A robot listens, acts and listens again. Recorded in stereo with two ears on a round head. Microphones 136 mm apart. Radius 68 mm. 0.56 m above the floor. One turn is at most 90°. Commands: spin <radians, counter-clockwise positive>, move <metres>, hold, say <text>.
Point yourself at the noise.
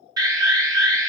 spin -0.44
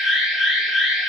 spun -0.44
say Found it: an alarm, straight ahead.